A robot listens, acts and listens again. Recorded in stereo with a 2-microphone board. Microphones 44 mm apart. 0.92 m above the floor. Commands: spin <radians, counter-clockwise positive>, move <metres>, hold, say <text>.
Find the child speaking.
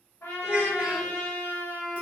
spin -0.44
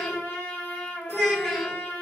say Facing the child speaking, under 1 m away.